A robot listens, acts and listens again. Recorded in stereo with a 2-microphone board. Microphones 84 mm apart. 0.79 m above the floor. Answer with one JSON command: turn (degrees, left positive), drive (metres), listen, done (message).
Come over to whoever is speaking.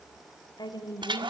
{"turn": 55}
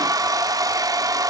{"listen": true}
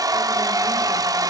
{"listen": true}
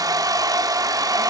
{"done": "I heard a woman speaking, but can't make it out now. It was about straight ahead or 70° left. I did not reach it."}